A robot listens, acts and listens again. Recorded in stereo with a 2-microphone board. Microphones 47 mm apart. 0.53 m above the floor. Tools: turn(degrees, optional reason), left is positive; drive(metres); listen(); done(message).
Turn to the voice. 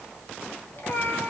listen()
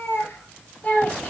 turn(degrees=35, reason="The child speaking: about 35° left or 145° left.")
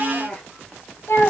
turn(degrees=110, reason="So it is at 110° left.")
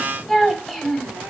done("Facing the child speaking, 1 to 2 m away.")